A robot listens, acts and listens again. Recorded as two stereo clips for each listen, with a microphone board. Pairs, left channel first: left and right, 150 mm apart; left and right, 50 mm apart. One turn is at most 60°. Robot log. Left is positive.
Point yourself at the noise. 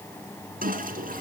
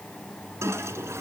note: The toilet flushing: about 75° right or 105° right.
cmd yaw -60
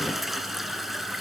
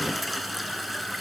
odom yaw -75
end: Facing the toilet flushing, 2 to 4 m away.